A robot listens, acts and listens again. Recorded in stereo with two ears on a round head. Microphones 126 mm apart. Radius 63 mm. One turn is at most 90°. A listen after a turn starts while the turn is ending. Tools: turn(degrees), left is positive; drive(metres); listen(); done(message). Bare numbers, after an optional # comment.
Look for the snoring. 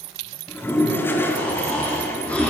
turn(30)
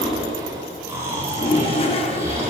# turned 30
# So it is at 20° right.
turn(-20)
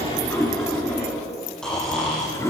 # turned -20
done("Found it: snoring, straight ahead, over 4 m away.")